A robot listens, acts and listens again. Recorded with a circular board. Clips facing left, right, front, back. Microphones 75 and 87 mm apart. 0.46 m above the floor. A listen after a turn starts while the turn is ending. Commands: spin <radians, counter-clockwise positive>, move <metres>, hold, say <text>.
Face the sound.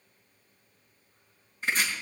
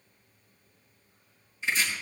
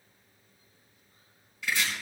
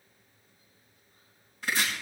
spin 2.36
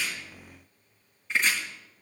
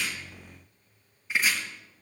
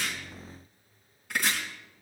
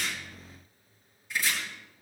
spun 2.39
say Facing the chopping, over 4 m away.